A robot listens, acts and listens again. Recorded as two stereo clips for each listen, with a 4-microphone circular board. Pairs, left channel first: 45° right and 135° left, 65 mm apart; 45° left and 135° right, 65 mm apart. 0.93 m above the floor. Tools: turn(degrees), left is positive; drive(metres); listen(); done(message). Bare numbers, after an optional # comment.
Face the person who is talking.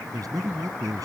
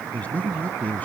# The man speaking: 110° left.
turn(110)
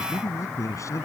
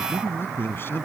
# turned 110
# The man speaking is now 10° right.
turn(-10)
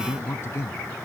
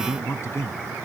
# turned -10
done("Facing the man speaking.")